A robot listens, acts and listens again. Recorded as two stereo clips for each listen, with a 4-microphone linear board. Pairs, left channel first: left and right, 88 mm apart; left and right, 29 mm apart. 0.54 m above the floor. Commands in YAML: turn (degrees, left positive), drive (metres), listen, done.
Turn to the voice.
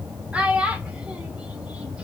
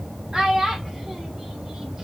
turn: -30
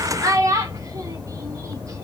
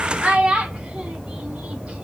turn: -135
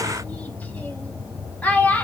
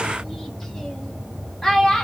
turn: 20
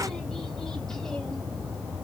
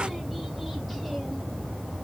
listen: true
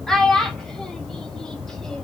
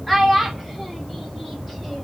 done: "Facing the child speaking, under 1 m away."